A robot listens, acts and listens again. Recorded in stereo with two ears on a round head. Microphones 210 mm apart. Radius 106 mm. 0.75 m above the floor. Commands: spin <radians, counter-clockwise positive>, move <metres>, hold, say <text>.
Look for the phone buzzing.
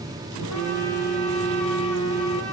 spin -1.13
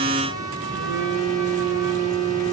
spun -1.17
spin -0.87
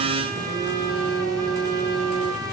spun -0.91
say Facing the phone buzzing, 2 to 4 m away.